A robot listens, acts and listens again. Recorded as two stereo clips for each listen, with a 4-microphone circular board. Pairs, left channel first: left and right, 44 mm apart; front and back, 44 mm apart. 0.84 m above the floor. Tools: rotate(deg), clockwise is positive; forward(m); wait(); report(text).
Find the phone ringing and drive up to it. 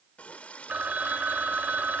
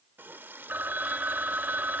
rotate(140)
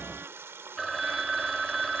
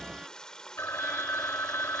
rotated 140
forward(1.0)
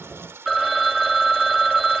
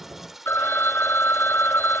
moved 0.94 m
forward(1.0)
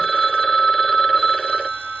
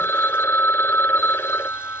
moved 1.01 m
forward(1.0)
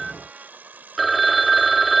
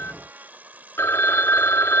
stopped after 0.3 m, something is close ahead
report("Arrived at the phone ringing, straight ahead.")